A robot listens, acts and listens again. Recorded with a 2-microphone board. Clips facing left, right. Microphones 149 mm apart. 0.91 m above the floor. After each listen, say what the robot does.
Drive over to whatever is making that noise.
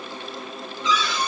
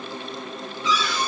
Turn 30° right.
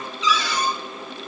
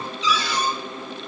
Turn 145° right.
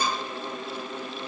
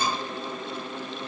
Keep listening.
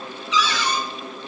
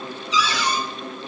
Turn 35° right.
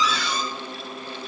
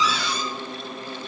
Drive 1.0 m forward.
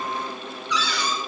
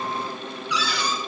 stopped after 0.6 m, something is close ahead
Turn 10° right.
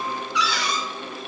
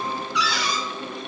Something is in my way. I am facing the cupboard door but have not reached it.